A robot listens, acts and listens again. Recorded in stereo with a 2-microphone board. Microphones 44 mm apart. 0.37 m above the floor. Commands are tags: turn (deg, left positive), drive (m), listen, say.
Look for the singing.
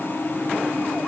<listen/>
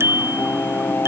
<turn deg="60"/>
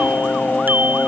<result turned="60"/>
<turn deg="15"/>
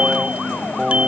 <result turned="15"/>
<turn deg="-20"/>
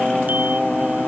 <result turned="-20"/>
<turn deg="-25"/>
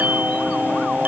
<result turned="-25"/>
<turn deg="-30"/>
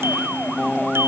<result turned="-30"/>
<listen/>
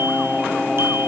<listen/>
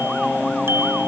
<say>Facing the singing.</say>